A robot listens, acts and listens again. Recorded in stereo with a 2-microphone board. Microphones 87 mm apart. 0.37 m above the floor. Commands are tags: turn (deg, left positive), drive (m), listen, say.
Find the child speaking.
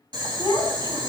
<turn deg="50"/>
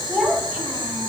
<turn deg="-15"/>
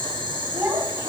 <turn deg="-25"/>
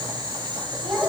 <turn deg="-15"/>
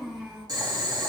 <say>Found it: a child speaking, straight ahead.</say>